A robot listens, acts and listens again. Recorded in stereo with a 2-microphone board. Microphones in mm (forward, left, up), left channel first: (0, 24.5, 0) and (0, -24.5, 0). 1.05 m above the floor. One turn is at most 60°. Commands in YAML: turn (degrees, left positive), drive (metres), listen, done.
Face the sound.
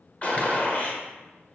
turn: 35
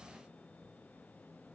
listen: true
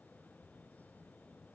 done: "I heard a gunshot, but can't make it out now. It was about straight ahead or 110° left."